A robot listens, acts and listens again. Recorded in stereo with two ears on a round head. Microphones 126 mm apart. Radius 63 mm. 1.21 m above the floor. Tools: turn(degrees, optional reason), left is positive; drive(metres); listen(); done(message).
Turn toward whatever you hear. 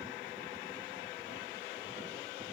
listen()
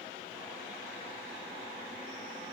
listen()
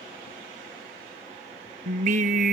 turn(degrees=-55, reason="The singing: about 55° right or 125° right.")
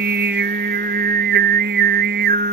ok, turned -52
turn(degrees=-75, reason="So it is at 75° right.")
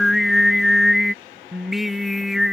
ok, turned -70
done("Found it: singing, straight ahead.")